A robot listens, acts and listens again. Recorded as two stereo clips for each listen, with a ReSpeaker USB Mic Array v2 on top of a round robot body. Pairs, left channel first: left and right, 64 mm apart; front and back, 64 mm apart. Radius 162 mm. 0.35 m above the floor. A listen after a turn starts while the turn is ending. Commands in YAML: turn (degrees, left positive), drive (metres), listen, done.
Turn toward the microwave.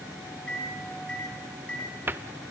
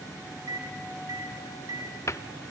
turn: 165
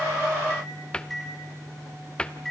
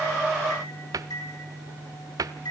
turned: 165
done: "Facing the microwave."